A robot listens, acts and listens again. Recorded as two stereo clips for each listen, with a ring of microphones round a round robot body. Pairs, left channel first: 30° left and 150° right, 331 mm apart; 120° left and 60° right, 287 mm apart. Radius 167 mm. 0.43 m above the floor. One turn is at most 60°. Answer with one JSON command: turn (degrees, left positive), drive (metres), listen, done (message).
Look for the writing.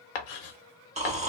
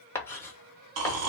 {"turn": 40}
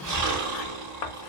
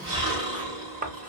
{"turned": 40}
{"done": "Facing the writing."}